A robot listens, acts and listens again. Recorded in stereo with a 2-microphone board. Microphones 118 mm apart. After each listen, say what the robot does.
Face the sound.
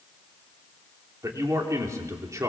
Turn 25° right.
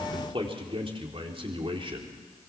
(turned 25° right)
Turn 130° right.
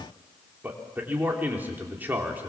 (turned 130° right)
Turn 15° right.
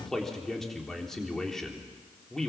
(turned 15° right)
Found it: a man speaking, straight ahead.